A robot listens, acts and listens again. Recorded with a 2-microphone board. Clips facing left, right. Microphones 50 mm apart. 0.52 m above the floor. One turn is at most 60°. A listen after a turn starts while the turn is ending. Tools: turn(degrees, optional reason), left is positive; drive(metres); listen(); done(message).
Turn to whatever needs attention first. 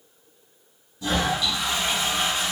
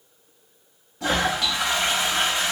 listen()
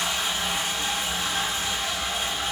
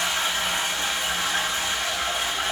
listen()
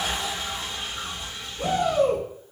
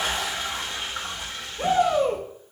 turn(degrees=-25, reason="The shout: about 25° right or 155° right.")
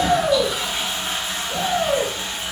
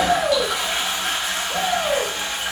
turn(degrees=-10, reason="So it is at 10° right.")
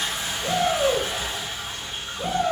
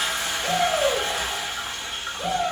done("Facing the shout.")